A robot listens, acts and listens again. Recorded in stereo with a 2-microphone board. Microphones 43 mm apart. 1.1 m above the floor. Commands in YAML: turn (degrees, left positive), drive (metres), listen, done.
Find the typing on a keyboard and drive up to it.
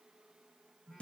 listen: true
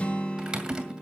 turn: -15
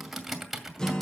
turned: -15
drive: 1.0
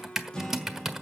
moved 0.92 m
turn: -10
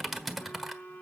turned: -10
drive: 1.0
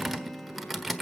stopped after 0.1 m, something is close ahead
done: "I am next to the typing on a keyboard."